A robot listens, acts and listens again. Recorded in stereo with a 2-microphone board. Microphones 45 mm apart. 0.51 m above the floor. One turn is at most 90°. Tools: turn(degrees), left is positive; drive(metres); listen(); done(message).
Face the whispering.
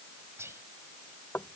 turn(degrees=-70)
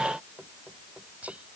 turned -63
turn(degrees=-30)
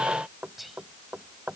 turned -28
done("Facing the whispering.")